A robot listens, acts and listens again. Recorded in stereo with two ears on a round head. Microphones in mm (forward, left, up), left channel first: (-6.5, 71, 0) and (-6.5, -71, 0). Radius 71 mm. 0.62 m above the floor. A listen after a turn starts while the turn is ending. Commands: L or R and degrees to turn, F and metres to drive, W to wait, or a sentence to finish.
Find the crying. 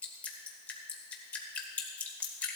W
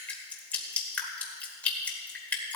W
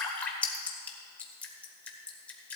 I can't make out crying to turn to.